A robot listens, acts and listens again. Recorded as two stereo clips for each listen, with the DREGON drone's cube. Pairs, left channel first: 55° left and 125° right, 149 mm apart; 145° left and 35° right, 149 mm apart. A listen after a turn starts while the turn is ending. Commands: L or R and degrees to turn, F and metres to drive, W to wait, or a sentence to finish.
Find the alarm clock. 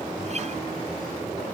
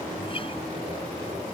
W
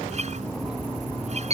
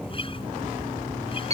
R80
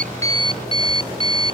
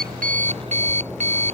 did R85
Found it: an alarm clock, straight ahead.